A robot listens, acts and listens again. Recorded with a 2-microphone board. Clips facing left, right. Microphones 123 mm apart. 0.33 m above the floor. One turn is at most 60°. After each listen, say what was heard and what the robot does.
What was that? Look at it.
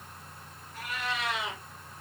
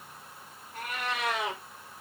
The cat meowing: about 60° right or 120° right. Turn 60° right.
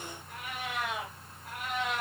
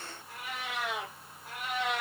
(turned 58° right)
So it is at 10° right. Turn 10° right.
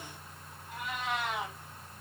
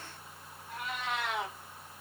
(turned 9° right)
Found it: a cat meowing, straight ahead.